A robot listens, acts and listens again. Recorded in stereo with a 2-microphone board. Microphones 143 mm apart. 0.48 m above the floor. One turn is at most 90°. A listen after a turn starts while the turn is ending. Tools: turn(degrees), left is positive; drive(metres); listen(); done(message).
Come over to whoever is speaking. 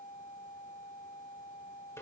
listen()
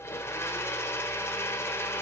listen()
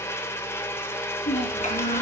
turn(degrees=60)
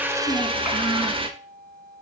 listen()
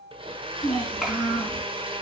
drive(metres=1.0)
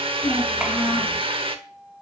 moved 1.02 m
turn(degrees=-10)
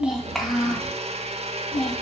drive(metres=1.0)
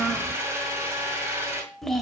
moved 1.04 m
drive(metres=1.0)
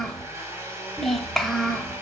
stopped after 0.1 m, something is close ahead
done("Arrived at the child speaking, straight ahead.")